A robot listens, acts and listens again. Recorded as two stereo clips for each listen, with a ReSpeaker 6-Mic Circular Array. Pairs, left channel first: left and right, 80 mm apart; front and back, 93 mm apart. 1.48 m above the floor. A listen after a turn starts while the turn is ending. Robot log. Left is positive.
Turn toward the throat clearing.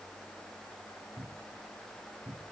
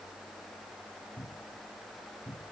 cmd idle
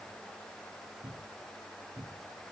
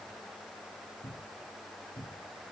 cmd idle
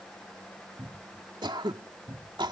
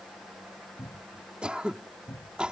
note: The throat clearing: 100° right.
cmd yaw -100
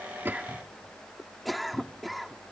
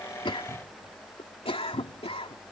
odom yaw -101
end: Found it: throat clearing, straight ahead.